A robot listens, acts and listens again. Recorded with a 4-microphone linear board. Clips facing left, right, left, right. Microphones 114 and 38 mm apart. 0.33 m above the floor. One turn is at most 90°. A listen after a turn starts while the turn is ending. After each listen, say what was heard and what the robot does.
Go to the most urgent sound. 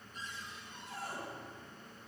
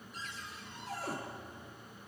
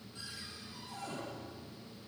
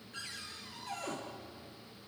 Keep listening.
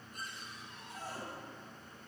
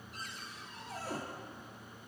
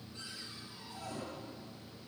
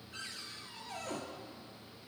Keep listening.
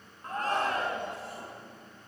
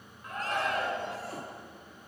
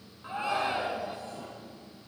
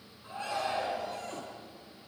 The shout: about 35° left or 145° left. Turn 35° left.
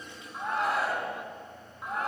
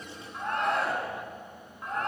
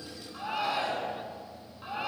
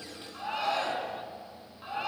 Drive 1.0 m forward.
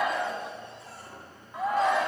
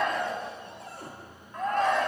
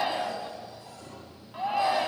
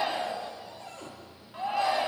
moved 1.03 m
Drive 1.0 m forward.
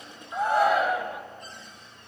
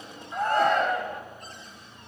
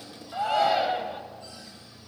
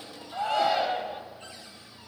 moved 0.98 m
Drive 1.0 m forward.
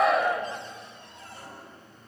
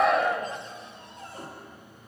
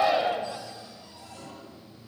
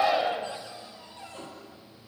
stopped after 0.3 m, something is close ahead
Arrived at the shout, straight ahead.